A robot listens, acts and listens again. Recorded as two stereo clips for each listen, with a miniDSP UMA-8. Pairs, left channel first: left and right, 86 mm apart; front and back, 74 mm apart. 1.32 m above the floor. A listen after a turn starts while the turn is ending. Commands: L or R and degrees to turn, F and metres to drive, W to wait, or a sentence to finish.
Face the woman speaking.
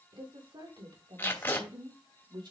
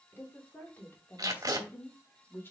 R60
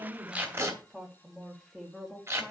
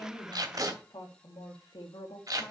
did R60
Found it: a woman speaking, straight ahead, 2 to 4 m away.